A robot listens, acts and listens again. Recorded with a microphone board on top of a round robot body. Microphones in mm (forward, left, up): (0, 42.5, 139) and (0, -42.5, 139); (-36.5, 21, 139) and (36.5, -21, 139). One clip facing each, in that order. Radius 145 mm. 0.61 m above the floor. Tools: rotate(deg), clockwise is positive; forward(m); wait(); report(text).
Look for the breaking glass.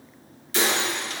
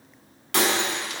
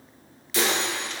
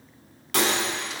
rotate(65)
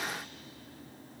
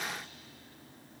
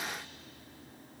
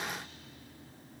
report("Facing where the breaking glass came from. I can't hear it now.")